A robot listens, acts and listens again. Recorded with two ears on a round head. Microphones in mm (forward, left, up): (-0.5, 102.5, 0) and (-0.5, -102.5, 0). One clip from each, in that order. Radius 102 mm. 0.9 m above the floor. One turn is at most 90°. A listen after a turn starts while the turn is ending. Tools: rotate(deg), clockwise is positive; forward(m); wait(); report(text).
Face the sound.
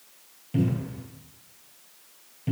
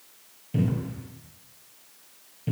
rotate(-30)
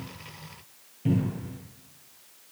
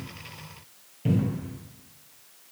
rotate(20)
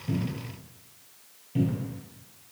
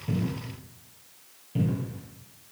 report("Found it: a cupboard door, straight ahead, 1 to 2 m away.")